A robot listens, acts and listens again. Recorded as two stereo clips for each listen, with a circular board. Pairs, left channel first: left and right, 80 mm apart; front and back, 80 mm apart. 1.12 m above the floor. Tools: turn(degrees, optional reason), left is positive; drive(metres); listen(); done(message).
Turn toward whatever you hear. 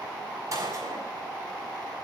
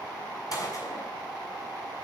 turn(degrees=-40, reason="The gunshot: 40° right.")
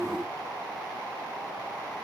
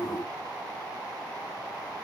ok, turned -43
done("I heard a gunshot from this way, but can't make it out now.")